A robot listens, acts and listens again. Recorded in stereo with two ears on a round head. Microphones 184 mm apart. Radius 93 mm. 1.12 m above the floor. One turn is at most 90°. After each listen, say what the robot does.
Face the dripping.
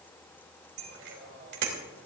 Keep listening.
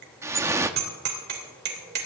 Turn 30° right.
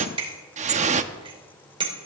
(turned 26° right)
Turn 90° right.
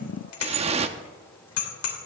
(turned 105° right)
Turn 35° right.
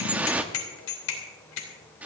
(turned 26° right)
Turn 10° right.
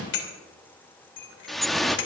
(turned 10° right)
Found it: dripping, straight ahead.